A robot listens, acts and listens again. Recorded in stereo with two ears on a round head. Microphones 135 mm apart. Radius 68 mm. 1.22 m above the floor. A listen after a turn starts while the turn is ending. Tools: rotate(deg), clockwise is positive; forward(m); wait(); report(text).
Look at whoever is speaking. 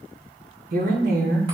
rotate(65)
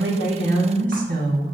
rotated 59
rotate(55)
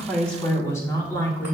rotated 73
rotate(-15)
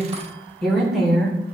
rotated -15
report("Found it: a woman speaking, straight ahead.")